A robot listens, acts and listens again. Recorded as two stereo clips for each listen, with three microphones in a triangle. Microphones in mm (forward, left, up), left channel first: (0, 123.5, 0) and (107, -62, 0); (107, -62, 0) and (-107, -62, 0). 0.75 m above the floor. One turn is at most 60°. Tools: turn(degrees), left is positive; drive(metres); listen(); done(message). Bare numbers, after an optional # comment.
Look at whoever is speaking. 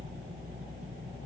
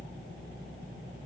listen()
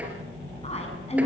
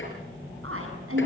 # The woman speaking: straight behind.
turn(60)
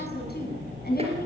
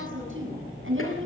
# The woman speaking is now 165° left.
turn(60)
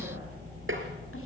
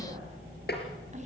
# Nothing new. It was at 105° left.
turn(60)
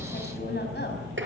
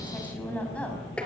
# Nothing new. It was at 45° left.
turn(45)
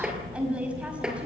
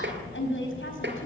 # The woman speaking is now 25° left.
turn(25)
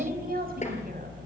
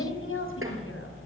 # The woman speaking is now 15° right.
turn(-15)
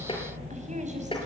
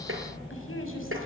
listen()
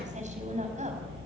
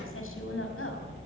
listen()
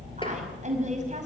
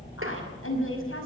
done("Facing the woman speaking, over 4 m away.")